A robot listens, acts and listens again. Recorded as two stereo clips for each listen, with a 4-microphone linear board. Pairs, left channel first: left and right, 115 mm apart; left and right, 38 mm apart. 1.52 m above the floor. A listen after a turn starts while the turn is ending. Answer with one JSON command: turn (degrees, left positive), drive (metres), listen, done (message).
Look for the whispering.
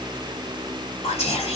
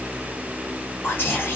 {"turn": 75}
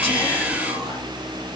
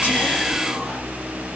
{"listen": true}
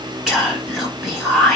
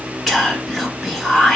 {"done": "Facing the whispering."}